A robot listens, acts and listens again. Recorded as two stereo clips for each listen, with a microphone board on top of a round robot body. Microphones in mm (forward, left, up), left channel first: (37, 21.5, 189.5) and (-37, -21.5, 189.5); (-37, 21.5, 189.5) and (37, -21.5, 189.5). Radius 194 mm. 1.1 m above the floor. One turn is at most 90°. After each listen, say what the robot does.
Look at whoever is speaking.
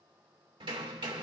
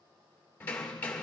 Keep listening.
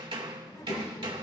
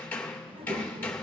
Turn 20° right.
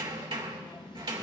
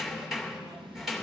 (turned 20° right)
Found it: a child speaking, straight ahead.